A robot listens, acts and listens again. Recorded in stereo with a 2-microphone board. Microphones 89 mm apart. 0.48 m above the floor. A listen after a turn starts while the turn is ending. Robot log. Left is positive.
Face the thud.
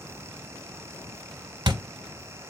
note: The thud: about 55° right or 125° right.
cmd yaw -55
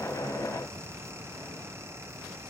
cmd idle
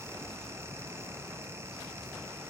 end: I heard a thud, but can't make it out now. It was about straight ahead or 70° right.